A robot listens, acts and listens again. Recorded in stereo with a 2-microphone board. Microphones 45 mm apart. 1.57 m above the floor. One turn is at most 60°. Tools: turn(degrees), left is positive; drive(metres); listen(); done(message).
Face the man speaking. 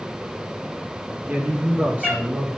turn(degrees=-30)
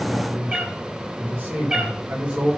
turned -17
turn(degrees=-30)
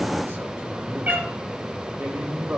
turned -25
turn(degrees=-60)
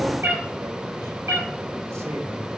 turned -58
turn(degrees=-60)
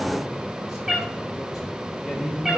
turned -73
done("Found it: a man speaking, straight ahead.")